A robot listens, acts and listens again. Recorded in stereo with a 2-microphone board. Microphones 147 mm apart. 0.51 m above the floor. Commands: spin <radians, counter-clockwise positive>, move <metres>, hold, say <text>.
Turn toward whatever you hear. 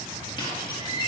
spin 0.61
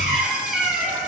say Facing the squeak.